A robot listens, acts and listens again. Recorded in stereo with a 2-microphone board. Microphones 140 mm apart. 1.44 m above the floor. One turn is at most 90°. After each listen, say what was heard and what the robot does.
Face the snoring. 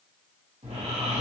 The snoring: about 50° right or 130° right. Turn 50° right.
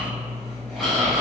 Found it: snoring, straight ahead, 1 to 2 m away.